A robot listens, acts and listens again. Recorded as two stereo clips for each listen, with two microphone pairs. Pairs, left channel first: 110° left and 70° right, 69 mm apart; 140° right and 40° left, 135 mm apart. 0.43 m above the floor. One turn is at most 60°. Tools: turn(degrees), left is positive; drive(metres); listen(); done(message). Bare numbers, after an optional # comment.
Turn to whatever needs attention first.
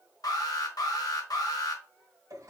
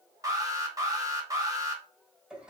# The alarm: 105° left.
turn(60)
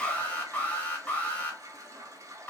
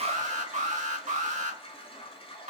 # The alarm is now 45° left.
turn(45)
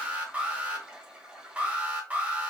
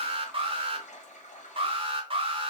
done("Facing the alarm.")